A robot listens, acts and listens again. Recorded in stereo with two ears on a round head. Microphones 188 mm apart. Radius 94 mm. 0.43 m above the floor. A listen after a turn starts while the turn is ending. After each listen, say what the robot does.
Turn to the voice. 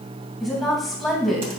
Turn 30° left.
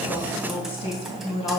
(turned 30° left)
Turn 150° left.
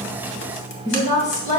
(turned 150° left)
Turn 40° left.
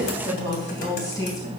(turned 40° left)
Turn 20° left.
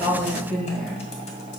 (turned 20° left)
Facing the woman speaking.